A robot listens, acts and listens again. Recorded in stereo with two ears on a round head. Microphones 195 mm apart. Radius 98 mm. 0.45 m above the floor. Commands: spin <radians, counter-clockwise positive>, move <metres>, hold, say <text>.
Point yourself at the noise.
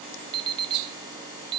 spin -0.44
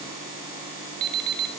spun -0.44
spin -2.36
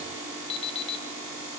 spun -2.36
spin 0.44
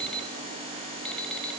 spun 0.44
say Facing the alarm clock, under 1 m away.